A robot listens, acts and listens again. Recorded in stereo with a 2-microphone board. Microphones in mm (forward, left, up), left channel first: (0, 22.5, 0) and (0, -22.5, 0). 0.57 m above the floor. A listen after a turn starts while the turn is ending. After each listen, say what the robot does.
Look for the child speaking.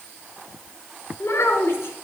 Turn 90° left.
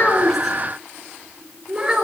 Turn 15° right.
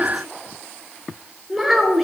Found it: a child speaking, straight ahead, 2 to 4 m away.